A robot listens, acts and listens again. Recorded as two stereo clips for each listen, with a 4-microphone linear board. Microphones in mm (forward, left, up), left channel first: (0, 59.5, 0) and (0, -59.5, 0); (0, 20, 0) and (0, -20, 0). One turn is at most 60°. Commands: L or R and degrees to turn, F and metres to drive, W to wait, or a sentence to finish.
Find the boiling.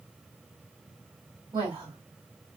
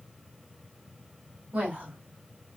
W
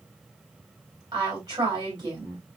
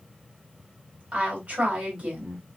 W
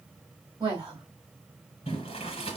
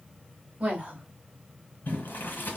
L60
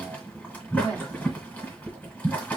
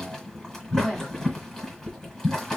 L10
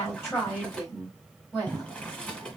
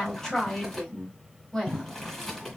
Facing the boiling, 1 to 2 m away.